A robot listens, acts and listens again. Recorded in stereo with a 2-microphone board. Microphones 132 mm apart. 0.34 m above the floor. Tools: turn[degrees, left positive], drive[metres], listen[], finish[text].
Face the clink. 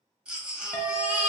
Thought: The clink: about 30° left or 150° left.
Action: turn[30]
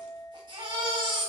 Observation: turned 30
Action: finish[Found it: a clink, straight ahead.]